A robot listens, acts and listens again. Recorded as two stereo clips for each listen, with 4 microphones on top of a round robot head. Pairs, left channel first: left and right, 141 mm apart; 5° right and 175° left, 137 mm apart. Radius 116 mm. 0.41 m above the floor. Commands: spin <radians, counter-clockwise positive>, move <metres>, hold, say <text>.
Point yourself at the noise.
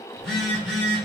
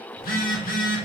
say Facing the phone buzzing, under 1 m away.